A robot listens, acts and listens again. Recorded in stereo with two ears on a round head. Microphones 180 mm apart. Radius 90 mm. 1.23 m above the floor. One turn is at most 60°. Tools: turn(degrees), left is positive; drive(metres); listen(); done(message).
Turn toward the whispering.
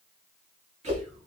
turn(degrees=-35)
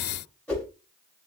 listen()
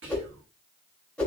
turn(degrees=-60)
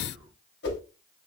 turn(degrees=-45)
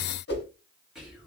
done("Found it: whispering, straight ahead, 1 to 2 m away.")